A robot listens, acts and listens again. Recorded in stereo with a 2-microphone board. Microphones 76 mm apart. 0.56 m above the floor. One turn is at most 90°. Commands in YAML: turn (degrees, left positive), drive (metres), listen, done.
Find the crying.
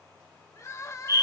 turn: 45
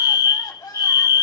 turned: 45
turn: 85
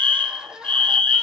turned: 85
turn: -10
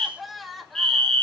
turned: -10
done: "Found it: crying, straight ahead, 2 to 4 m away."